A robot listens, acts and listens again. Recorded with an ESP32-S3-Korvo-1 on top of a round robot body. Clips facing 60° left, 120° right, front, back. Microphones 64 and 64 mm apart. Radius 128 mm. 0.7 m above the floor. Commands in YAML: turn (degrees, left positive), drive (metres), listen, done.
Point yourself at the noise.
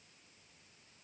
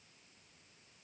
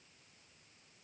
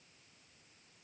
listen: true
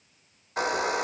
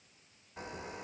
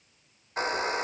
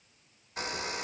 turn: 55
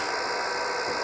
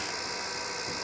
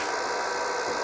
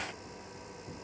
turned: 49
done: "Facing the hair dryer."